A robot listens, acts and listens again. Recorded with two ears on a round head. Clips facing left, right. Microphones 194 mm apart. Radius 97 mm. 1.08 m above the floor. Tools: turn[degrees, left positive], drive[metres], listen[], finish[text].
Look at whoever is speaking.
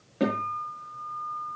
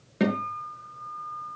Action: listen[]
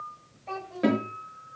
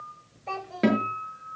Thought: The child speaking: about 60° right or 120° right.
Action: turn[-60]
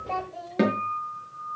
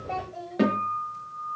Action: finish[Found it: a child speaking, straight ahead, over 4 m away.]